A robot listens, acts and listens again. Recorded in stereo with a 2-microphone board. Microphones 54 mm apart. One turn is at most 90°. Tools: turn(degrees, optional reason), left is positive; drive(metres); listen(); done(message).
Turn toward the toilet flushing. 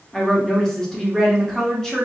listen()
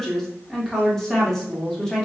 listen()
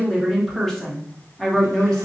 done("I can't make out a toilet flushing to turn to.")